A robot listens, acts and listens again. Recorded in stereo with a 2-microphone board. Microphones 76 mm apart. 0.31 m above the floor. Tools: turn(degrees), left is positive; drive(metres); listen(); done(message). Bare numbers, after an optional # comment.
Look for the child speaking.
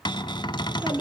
turn(-30)
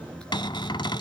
# So it is at 15° left.
turn(15)
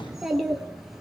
done("Facing the child speaking.")